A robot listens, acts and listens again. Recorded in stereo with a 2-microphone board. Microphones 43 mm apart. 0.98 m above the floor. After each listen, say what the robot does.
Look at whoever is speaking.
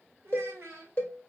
Turn 65° right.
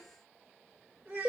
Turn 50° right.
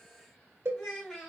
Facing the child speaking, 2 to 4 m away.